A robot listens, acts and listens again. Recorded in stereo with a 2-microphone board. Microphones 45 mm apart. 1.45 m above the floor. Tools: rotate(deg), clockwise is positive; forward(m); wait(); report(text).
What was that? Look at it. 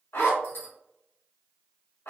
rotate(-60)
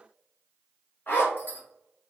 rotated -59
rotate(-50)
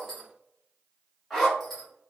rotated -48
report("Found it: a zipper, straight ahead.")